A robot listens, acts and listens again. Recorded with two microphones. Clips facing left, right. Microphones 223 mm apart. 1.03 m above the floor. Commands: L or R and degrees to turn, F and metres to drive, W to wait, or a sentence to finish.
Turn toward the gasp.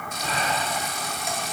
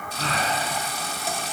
R90
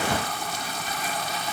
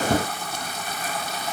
I heard a gasp from this way, but can't make it out now.